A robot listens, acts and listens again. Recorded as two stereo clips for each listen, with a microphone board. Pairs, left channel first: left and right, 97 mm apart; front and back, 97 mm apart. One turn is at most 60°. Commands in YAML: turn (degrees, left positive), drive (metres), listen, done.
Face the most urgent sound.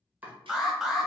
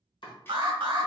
turn: -60
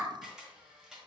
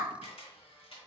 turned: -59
turn: -60
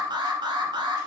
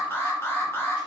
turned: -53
turn: -60
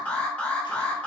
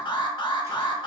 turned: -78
turn: 15
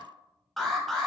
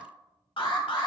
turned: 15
done: "Found it: an alarm, straight ahead, under 1 m away."